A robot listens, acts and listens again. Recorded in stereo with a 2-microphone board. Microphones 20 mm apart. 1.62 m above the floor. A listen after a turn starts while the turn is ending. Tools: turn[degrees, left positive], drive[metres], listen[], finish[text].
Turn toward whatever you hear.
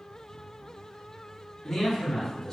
Thought: The man speaking: about 30° left or 150° left.
Action: turn[30]
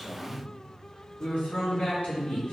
Thought: So it is at 95° left.
Action: turn[95]
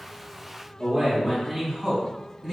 Action: finish[Found it: a man speaking, straight ahead.]